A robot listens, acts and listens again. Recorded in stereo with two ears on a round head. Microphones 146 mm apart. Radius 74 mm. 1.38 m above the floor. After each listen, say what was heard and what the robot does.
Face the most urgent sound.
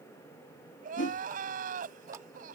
The crying: about 55° right or 125° right. Turn 55° right.
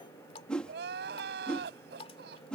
So it is at 65° right. Turn 65° right.
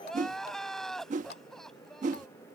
Found it: crying, straight ahead.